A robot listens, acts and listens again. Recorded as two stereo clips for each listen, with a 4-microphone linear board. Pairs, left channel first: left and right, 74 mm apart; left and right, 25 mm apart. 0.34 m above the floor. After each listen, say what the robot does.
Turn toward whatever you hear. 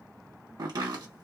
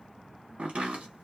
Turn 55° right.
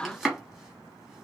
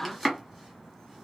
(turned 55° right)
Found it: chopping, straight ahead, 1 to 2 m away.